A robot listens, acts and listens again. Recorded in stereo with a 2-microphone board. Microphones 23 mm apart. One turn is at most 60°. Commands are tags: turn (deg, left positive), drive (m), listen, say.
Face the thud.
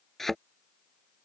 <turn deg="30"/>
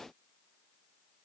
<listen/>
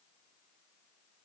<say>I heard a thud, but can't make it out now. It was about 20° right or 140° left.</say>